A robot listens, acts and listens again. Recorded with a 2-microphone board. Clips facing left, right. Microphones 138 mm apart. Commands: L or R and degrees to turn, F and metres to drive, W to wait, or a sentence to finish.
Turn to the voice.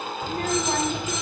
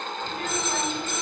L45
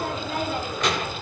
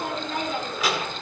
Found it: a child speaking, straight ahead, 1 to 2 m away.